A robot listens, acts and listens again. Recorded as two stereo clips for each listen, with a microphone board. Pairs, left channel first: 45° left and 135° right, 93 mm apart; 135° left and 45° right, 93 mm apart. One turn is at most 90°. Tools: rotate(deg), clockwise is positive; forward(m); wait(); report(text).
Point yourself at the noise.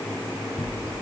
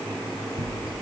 rotate(65)
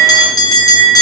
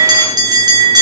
report("Found it: a bell, straight ahead, over 4 m away.")